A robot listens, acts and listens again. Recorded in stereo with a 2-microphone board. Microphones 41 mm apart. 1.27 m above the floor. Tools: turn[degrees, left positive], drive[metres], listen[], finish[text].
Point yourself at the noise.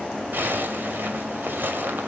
Thought: The zipper: about 55° right or 125° right.
Action: turn[-55]
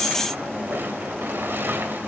Thought: So it is at 65° right.
Action: turn[-65]
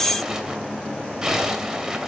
Thought: The zipper is now 10° right.
Action: turn[-10]
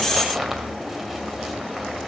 Action: finish[Found it: a zipper, straight ahead, 2 to 4 m away.]